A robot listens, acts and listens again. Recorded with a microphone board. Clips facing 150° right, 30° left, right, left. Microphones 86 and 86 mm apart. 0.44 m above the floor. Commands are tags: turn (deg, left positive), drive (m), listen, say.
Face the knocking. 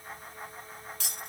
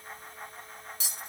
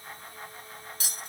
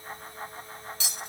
<listen/>
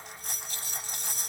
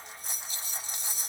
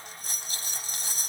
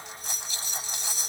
<listen/>
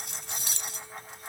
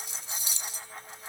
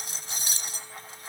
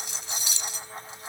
<say>I can't make out knocking, only cutlery clinking.</say>